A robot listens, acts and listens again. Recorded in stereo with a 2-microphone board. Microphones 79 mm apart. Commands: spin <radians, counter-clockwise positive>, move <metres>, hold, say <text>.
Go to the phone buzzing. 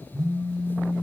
spin -0.70
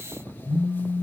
spin -0.17
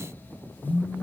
move 1.0
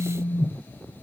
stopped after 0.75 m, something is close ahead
say I am next to the phone buzzing.